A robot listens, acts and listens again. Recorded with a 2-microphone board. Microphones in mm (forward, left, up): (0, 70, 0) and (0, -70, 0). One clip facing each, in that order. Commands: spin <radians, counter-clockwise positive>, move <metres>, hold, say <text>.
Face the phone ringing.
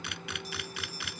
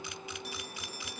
spin -1.13
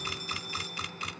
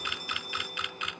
hold
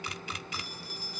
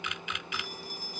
spin -0.87
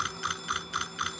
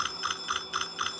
say Facing the phone ringing.